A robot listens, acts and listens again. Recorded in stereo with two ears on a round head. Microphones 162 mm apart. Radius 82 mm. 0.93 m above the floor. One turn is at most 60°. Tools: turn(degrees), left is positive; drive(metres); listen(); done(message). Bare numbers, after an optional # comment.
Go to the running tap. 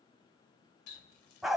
# The running tap: about 65° left or 115° left.
turn(60)
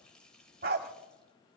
drive(1.0)
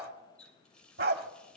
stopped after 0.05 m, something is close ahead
done("Something is in my way. I am facing the running tap but have not reached it.")